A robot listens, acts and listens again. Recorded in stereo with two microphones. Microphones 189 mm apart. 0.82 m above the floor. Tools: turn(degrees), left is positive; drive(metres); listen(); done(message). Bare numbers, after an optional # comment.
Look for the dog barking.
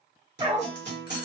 # The dog barking: about 25° right or 155° right.
turn(-25)
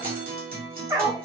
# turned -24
# The dog barking: about 25° right or 155° right.
turn(-25)
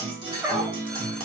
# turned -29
turn(-30)
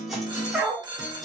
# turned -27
# So it is at 10° right.
turn(-10)
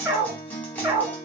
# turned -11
# The dog barking is now 15° right.
turn(-15)
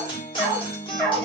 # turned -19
done("Found it: a dog barking, straight ahead.")